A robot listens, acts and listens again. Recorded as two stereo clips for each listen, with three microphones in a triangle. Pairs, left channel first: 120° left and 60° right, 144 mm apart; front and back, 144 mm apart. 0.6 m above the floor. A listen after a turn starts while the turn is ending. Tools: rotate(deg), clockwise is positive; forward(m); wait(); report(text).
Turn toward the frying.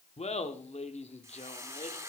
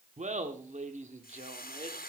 rotate(-15)
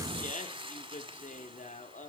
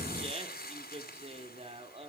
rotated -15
report("Facing the frying, 1 to 2 m away.")